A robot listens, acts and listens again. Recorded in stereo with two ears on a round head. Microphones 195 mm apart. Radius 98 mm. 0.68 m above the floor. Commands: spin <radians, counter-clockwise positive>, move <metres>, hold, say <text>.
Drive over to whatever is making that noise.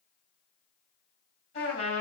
spin 0.52
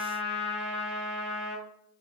move 1.0
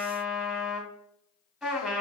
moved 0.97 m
move 1.0
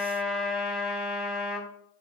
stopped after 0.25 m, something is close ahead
say Arrived at the trumpet, straight ahead.